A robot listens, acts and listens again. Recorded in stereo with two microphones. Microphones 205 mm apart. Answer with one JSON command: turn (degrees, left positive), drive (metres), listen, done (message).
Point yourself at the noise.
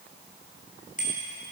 {"turn": 40}
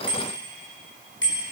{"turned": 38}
{"turn": 100}
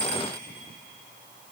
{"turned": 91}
{"turn": 10}
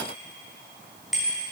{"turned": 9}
{"done": "Found it: a bicycle bell, straight ahead, over 4 m away."}